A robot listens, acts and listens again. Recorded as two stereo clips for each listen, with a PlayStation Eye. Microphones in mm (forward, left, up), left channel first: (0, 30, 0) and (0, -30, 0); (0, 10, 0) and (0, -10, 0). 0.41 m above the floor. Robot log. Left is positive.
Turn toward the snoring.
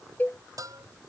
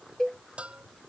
cmd idle
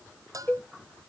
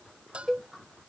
cmd idle
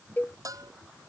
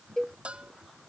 end: I can't make out snoring to turn to.